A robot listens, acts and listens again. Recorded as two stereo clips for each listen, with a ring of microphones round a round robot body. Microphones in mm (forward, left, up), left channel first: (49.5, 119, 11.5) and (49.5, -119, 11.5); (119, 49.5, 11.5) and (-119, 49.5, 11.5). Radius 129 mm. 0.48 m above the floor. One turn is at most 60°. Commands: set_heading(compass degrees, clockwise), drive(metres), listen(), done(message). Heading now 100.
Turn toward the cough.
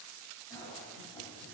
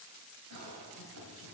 set_heading(40)
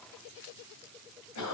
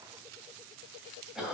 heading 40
set_heading(340)
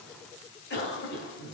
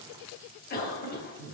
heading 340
set_heading(290)
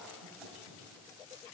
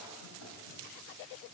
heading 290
listen()
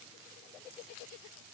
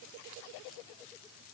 listen()
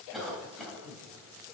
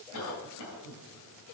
done("Found it: a cough, straight ahead, 2 to 4 m away.")